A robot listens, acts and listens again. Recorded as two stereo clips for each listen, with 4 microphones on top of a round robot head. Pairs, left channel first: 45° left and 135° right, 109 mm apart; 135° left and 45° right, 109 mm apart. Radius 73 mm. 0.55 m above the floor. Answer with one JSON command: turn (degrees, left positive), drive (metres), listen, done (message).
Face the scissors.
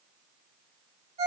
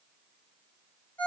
{"listen": true}
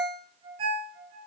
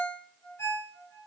{"listen": true}
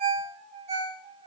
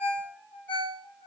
{"done": "I can't make out scissors, only a ringtone."}